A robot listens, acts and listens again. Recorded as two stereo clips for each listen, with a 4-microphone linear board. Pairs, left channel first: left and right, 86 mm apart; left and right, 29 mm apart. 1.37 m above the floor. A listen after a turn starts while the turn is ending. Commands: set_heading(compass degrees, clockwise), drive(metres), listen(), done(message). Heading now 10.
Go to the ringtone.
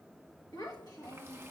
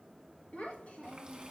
listen()
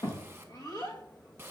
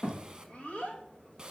listen()
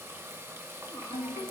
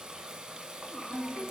set_heading(305)
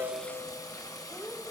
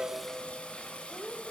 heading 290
listen()
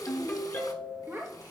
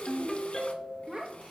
set_heading(260)
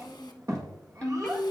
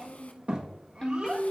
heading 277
set_heading(257)
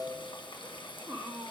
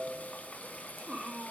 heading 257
listen()
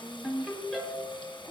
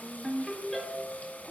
drive(1.0)
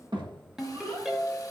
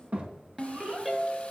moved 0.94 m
drive(1.0)
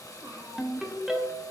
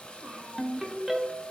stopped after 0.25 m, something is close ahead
done("Arrived at the ringtone, straight ahead.")